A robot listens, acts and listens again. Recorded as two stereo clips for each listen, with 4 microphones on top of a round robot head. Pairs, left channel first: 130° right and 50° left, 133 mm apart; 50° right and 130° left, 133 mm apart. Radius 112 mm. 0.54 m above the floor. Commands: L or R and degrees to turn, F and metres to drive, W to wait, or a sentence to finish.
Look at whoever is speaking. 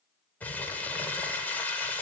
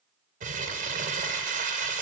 W
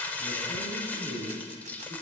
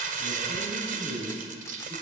L75
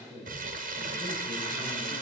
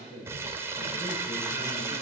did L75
R20
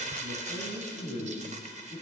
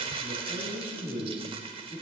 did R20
Facing the man speaking, over 4 m away.